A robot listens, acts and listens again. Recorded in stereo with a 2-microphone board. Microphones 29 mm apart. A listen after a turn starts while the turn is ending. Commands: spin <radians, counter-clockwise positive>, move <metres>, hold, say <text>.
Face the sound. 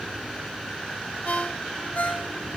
spin 1.05
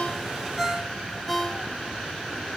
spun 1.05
say Found it: a ringtone, straight ahead.